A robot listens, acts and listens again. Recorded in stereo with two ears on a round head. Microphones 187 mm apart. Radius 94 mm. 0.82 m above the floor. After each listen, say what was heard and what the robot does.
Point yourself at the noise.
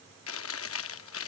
The chewing: about 70° left or 110° left. Turn 70° left.
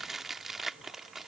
Facing the chewing.